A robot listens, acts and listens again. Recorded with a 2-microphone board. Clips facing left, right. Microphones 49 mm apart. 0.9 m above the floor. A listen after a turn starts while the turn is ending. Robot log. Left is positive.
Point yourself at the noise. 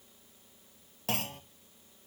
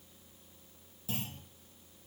note: The clunk: about 70° left or 110° left.
cmd yaw +70
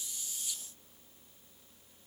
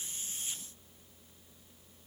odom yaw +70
cmd idle
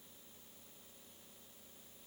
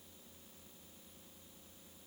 end: I heard a clunk, but can't make it out now. It was about straight ahead or 40° left.